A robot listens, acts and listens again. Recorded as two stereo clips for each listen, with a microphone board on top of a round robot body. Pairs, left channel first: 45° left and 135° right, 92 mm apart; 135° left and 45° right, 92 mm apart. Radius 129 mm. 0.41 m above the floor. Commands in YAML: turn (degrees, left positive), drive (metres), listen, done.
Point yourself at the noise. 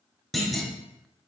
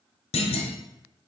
turn: 135
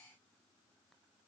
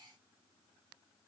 done: "Facing where the clunk came from. I can't hear it now."